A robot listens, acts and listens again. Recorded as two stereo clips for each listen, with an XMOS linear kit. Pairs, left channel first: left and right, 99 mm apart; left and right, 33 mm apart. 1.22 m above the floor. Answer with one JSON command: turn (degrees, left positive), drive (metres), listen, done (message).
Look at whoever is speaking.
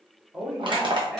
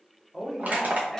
{"turn": -15}
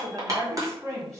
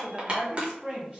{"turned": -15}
{"turn": -145}
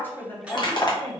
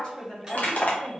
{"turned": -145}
{"turn": 20}
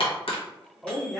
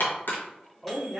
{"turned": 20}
{"done": "Found it: a woman speaking, straight ahead."}